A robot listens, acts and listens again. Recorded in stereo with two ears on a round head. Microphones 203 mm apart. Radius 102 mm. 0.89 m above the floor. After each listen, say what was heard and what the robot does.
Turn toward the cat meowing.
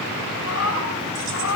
The cat meowing: about 70° left or 110° left. Turn 70° left.
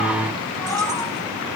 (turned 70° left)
So it is at 10° left. Turn 10° left.
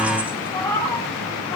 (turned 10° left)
The cat meowing is now 10° left. Turn 10° left.
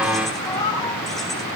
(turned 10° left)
The cat meowing is now 15° left. Turn 15° left.
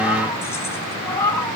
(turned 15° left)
The cat meowing is now 10° left. Turn 10° left.
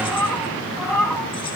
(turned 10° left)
Found it: a cat meowing, straight ahead.